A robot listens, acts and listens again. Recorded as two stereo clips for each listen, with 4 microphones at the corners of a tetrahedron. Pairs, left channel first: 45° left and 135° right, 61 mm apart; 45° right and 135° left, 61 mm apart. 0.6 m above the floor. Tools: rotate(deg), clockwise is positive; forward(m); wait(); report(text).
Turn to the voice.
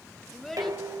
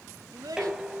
rotate(-130)
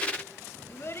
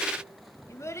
report("Facing the child speaking.")